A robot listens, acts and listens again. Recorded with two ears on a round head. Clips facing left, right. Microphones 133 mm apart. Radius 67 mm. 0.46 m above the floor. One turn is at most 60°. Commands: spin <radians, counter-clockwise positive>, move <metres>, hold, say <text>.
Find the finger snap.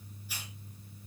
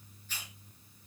hold
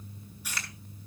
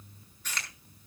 spin 0.52
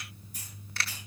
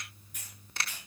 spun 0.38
spin -0.35
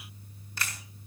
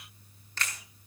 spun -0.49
spin 0.17
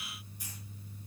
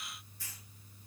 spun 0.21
hold
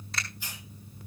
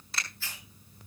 say Facing the finger snap, over 4 m away.